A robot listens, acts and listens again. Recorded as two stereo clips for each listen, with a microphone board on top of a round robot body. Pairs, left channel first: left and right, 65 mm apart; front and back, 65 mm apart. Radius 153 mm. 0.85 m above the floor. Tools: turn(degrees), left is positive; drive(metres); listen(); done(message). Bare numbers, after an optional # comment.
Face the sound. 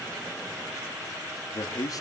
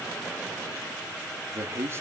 # The man speaking: 125° left.
turn(125)
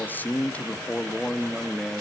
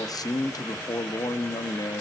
done("Facing the man speaking.")